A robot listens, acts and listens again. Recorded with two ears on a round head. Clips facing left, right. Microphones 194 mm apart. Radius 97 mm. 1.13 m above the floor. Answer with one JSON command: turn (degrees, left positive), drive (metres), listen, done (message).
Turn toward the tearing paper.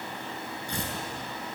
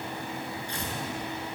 {"turn": 90}
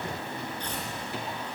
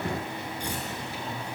{"turn": -10}
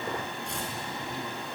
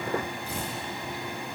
{"done": "Found it: tearing paper, straight ahead, over 4 m away."}